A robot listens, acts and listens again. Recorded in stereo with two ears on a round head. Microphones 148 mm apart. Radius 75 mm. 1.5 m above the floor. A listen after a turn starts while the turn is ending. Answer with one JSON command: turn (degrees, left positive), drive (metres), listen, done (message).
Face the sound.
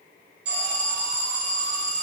{"turn": -70}
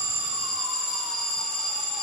{"done": "Found it: an alarm, straight ahead, 2 to 4 m away."}